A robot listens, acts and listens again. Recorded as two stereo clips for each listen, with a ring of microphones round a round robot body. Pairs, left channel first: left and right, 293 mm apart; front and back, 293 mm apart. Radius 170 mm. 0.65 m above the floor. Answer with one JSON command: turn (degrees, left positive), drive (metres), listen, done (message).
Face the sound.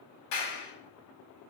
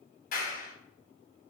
{"turn": 65}
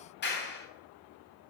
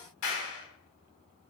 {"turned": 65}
{"turn": 35}
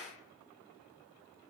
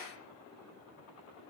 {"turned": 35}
{"listen": true}
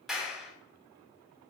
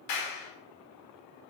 {"done": "Found it: a clap, straight ahead."}